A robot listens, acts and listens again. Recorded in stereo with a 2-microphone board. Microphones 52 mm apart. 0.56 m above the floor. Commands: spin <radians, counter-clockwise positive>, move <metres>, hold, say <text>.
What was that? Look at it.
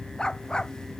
spin 0.26
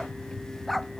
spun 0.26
spin 0.52
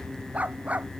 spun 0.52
spin -0.44
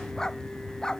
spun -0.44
spin 0.26
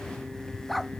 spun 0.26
say Found it: a dog barking, straight ahead.